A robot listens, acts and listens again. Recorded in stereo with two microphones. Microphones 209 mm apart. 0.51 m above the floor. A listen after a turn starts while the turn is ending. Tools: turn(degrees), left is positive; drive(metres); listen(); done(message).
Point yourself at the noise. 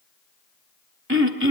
turn(degrees=-90)
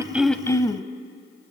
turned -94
turn(degrees=15)
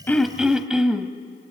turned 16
done("Facing the throat clearing.")